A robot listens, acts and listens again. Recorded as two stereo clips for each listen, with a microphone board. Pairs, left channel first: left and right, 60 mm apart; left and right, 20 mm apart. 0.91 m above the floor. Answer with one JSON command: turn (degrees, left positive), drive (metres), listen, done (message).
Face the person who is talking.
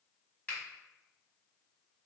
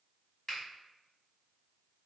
{"listen": true}
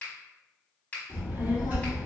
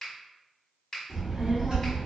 {"turn": -25}
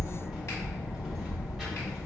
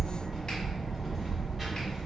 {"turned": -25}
{"done": "Facing the child speaking."}